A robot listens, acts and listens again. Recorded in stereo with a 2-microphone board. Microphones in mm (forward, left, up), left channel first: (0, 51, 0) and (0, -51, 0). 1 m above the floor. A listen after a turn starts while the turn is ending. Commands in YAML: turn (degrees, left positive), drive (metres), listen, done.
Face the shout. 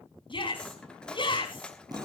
turn: 55
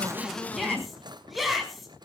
done: "Facing the shout, over 4 m away."